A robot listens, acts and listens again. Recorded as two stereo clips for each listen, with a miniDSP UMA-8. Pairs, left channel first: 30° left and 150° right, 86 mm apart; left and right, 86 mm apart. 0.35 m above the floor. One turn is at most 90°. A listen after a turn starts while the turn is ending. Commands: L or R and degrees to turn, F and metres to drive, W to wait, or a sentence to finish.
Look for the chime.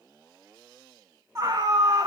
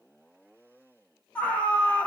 W
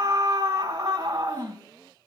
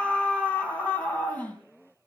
W
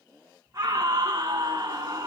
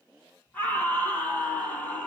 I can't make out a chime to turn to.